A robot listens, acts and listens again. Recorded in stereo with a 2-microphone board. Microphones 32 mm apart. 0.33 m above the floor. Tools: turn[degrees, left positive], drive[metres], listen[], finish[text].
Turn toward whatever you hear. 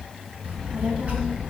Thought: The child speaking: about 45° right or 135° right.
Action: turn[-45]
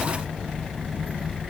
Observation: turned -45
Thought: So it is at 105° right.
Action: turn[-105]
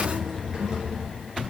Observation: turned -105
Thought: The child speaking is now 30° right.
Action: turn[-30]
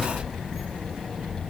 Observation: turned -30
Action: finish[Facing the child speaking, over 4 m away.]